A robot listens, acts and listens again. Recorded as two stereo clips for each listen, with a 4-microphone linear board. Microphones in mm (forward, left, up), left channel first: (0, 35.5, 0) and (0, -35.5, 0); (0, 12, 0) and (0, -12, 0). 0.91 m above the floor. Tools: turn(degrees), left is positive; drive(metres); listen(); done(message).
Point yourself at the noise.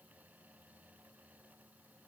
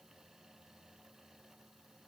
listen()
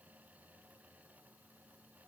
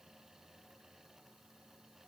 listen()
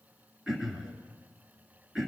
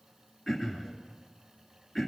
turn(degrees=-30)
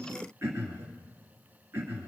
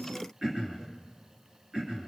turn(degrees=-145)
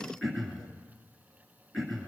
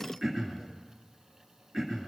done("Facing the throat clearing, 2 to 4 m away.")